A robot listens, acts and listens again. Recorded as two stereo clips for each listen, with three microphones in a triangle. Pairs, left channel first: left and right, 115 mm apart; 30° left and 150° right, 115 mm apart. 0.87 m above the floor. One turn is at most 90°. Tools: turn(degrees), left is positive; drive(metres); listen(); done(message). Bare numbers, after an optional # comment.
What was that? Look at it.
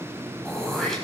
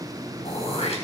done("Found it: throat clearing, straight ahead.")